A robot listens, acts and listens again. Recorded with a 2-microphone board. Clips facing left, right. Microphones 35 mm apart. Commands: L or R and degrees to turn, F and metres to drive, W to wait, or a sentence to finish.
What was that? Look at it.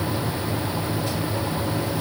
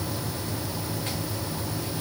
W
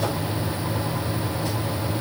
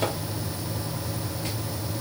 W
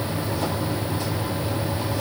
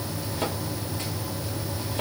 I can't make out anything.